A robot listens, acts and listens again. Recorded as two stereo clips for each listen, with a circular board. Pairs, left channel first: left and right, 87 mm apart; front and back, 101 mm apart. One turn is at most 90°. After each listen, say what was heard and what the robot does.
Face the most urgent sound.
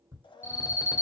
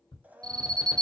The alarm: 135° left. Turn 90° left.
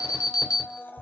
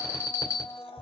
The alarm is now 50° left. Turn 50° left.
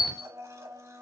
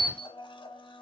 Facing the alarm.